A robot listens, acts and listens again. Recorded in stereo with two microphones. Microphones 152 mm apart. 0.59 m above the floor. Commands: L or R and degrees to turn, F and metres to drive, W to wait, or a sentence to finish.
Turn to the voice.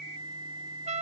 W
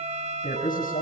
L65
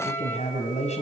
L50
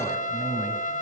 Facing the man speaking.